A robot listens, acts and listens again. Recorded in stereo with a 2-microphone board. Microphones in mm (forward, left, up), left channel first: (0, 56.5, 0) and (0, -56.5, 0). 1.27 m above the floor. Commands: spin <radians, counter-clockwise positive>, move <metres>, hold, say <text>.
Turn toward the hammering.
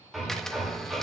spin 0.52
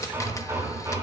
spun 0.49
spin -0.52
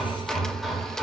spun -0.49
say Facing the hammering, 2 to 4 m away.